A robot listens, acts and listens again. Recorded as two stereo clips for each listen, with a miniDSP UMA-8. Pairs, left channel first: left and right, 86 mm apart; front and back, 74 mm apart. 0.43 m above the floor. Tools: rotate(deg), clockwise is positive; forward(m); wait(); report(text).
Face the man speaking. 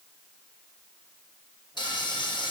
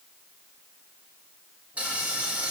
wait()
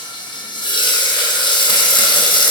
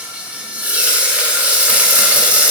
wait()
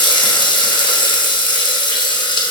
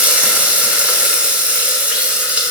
report("I can't make out a man speaking, only frying.")